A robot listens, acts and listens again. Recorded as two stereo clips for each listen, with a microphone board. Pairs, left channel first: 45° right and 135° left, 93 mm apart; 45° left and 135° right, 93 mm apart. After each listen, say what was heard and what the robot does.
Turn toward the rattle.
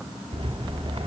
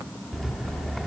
The rattle: 135° left. Turn 135° left.
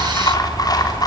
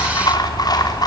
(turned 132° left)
Facing the rattle.